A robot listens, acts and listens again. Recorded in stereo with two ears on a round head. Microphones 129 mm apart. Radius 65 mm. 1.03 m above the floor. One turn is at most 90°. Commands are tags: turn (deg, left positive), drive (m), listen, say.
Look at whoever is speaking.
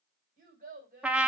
<turn deg="-65"/>
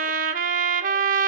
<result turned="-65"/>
<listen/>
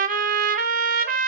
<listen/>
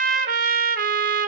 <say>I heard a child speaking, but can't make it out now. It was about straight ahead or 50° right.</say>